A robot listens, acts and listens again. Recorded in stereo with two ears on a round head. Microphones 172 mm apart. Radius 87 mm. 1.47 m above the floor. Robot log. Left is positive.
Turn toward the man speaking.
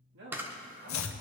note: The man speaking: about 70° right or 110° right.
cmd yaw -70
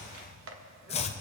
cmd idle
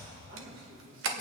note: So it is at 55° right.
cmd yaw -55
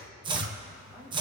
cmd idle
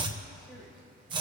cmd idle
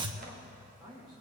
end: Found it: a man speaking, straight ahead, over 4 m away.